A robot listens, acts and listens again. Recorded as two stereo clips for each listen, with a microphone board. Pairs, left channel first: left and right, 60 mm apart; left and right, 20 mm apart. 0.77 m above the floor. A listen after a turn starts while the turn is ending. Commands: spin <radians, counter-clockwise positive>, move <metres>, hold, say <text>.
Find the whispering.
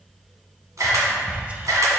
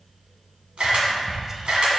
spin -0.35
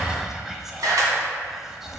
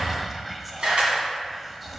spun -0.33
say Facing the whispering.